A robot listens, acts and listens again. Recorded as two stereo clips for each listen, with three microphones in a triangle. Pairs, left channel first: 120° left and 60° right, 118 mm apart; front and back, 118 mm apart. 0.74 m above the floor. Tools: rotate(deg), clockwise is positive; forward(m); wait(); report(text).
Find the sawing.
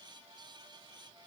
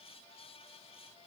wait()
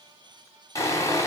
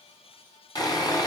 rotate(-55)
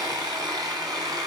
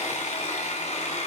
report("Found it: sawing, straight ahead, 2 to 4 m away.")